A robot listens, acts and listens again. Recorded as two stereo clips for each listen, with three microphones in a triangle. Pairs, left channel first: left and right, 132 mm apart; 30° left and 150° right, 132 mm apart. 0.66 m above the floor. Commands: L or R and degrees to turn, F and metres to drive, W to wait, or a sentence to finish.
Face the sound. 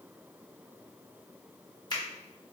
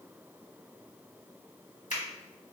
L35
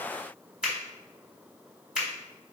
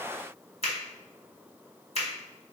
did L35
R10
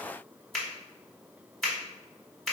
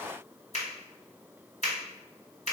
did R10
Found it: a finger snap, straight ahead, 1 to 2 m away.